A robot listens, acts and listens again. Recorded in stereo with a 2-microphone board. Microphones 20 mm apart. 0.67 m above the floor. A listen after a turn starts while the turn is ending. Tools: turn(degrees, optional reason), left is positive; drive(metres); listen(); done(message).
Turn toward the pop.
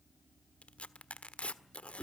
listen()
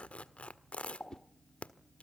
turn(degrees=50, reason="The pop: about 50° left or 130° left.")
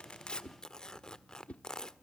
listen()
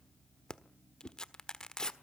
done("I heard a pop, but can't make it out now. It was about straight ahead or 80° left.")